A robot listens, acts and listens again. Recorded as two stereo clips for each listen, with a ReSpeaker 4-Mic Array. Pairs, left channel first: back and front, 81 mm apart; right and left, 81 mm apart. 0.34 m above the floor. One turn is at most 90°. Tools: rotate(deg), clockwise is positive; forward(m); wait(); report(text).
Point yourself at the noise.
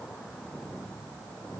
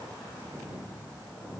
wait()
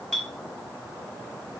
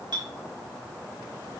rotate(-90)
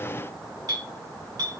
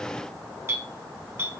rotate(-35)
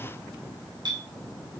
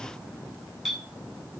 report("Facing the clink, 2 to 4 m away.")